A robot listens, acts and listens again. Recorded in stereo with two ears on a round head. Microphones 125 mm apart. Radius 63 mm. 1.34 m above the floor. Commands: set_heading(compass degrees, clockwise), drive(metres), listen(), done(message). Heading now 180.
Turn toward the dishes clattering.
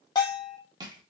listen()
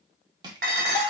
set_heading(270)
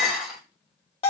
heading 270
done("Facing the dishes clattering.")